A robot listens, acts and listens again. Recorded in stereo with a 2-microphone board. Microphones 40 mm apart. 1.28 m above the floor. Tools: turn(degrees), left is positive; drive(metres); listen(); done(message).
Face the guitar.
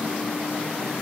listen()
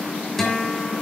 turn(degrees=30)
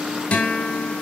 turn(degrees=140)
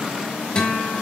turn(degrees=20)
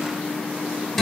done("Found it: a guitar, straight ahead, 2 to 4 m away.")